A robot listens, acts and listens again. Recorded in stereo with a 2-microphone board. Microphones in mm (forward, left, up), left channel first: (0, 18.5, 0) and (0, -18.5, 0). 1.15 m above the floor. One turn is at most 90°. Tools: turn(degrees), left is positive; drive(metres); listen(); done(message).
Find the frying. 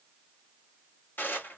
listen()
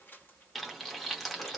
turn(degrees=30)
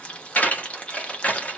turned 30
turn(degrees=90)
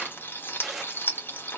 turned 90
turn(degrees=85)
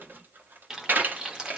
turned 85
turn(degrees=-15)
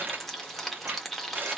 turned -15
done("Found it: frying, straight ahead.")